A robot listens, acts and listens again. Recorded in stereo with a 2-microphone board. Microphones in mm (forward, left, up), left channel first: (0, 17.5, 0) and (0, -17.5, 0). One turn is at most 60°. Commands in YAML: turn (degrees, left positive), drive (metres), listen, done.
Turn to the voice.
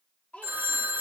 turn: 40
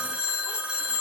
listen: true
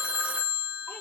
listen: true
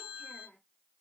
turn: 60
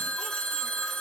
turn: 40
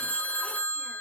listen: true
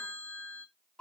turn: 25
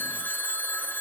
listen: true
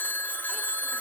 listen: true
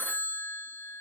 done: "Facing where the child speaking came from. I can't hear it now."